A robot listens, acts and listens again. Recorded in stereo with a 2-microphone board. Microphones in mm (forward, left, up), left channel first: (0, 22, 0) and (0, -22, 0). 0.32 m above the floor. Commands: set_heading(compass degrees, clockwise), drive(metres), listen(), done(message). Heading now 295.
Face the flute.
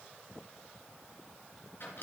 listen()
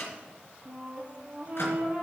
set_heading(325)
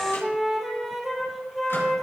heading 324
done("Found it: a flute, straight ahead.")